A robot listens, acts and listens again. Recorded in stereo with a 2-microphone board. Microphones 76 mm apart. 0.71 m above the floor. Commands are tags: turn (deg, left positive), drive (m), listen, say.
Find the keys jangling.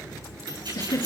<turn deg="-90"/>
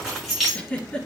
<say>Found it: keys jangling, straight ahead.</say>